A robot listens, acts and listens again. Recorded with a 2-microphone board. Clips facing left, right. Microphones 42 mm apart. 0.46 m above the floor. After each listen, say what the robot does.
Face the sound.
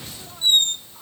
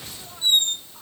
Turn 50° left.
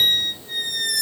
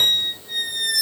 Facing the squeak, under 1 m away.